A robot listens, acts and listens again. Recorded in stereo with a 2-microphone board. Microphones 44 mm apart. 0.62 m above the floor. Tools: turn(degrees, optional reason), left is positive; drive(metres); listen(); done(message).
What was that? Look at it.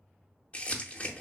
turn(degrees=30, reason="The crumpling: about 30° left or 150° left.")
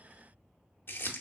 turn(degrees=120, reason="So it is at 120° left.")
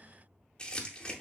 turn(degrees=20, reason="The crumpling is now 20° left.")
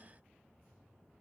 listen()
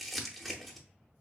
done("Facing the crumpling, under 1 m away.")